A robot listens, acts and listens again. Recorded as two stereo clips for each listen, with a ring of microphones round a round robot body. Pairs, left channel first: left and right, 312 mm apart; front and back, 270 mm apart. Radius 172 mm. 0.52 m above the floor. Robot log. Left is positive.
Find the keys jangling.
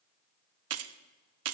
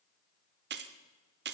note: The keys jangling: 130° right.
cmd yaw -130
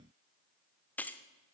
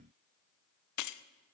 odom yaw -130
end: Found it: keys jangling, straight ahead.